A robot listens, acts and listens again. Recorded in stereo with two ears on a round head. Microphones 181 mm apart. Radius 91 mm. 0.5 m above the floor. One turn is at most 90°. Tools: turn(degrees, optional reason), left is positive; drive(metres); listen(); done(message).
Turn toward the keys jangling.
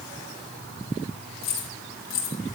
turn(degrees=60, reason="The keys jangling: about 60° left or 120° left.")
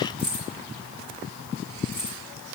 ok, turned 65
done("Found it: keys jangling, straight ahead.")